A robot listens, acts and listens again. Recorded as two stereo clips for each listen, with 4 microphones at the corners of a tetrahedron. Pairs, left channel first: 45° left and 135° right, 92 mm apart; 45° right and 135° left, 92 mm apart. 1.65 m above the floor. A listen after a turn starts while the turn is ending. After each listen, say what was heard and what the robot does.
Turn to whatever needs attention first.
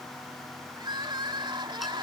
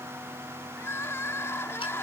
The crying: 105° right. Turn 105° right.
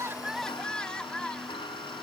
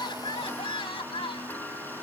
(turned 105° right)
The crying is now 35° right. Turn 35° right.
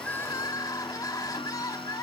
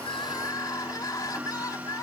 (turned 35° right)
Facing the crying.